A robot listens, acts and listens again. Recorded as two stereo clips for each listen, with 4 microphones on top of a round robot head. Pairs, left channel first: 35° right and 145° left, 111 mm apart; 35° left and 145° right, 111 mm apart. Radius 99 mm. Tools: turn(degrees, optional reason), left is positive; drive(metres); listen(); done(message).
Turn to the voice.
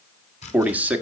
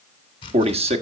turn(degrees=-140, reason="The man speaking: 140° right.")
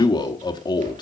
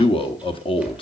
turn(degrees=10, reason="The man speaking is now 10° left.")
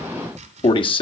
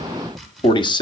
done("Facing the man speaking.")